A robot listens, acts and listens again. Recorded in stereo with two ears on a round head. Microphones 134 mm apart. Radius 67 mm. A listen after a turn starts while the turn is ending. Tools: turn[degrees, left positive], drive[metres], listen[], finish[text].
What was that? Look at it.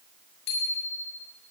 Action: turn[90]
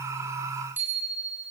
Thought: So it is at 15° right.
Action: turn[-15]
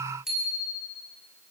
Action: finish[Found it: a bicycle bell, straight ahead, over 4 m away.]